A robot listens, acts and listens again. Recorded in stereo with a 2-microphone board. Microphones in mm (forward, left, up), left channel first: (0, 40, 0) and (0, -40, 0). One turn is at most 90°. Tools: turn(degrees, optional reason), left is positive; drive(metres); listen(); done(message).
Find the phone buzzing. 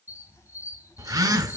turn(degrees=-45, reason="The phone buzzing: about 45° right or 135° right.")
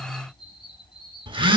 turn(degrees=-90, reason="So it is at 90° right.")
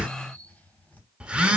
turn(degrees=-15, reason="The phone buzzing is now 15° right.")
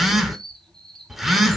done("Found it: a phone buzzing, straight ahead, under 1 m away.")